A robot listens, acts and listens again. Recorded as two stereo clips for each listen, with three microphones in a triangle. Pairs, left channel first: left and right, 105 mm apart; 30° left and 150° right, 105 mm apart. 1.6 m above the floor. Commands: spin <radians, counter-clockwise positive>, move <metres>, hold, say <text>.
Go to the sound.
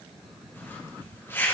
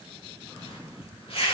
spin 0.44
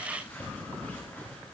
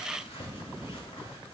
spin 0.26
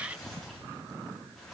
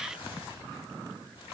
move 1.0
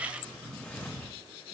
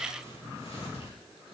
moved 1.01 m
spin 0.26
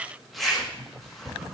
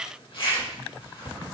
move 1.0
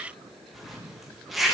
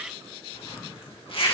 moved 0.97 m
move 1.0
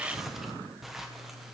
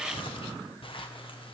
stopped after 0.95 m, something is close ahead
say Arrived at the zipper, straight ahead.